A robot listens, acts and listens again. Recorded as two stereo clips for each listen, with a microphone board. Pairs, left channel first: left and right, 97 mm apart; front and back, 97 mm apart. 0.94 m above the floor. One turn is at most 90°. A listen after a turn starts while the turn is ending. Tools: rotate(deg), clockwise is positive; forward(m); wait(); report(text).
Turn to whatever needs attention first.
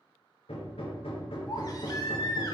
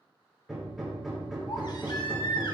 rotate(-40)
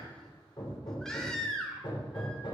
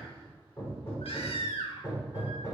report("Found it: a baby crying, straight ahead, 1 to 2 m away.")